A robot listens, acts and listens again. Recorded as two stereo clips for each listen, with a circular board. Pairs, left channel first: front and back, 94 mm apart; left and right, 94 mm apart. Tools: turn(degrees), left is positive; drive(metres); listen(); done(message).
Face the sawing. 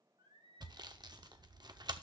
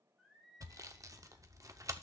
turn(degrees=-145)
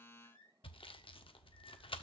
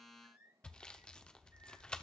turn(degrees=10)
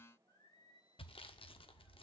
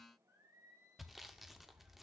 done("Found it: sawing, straight ahead, under 1 m away.")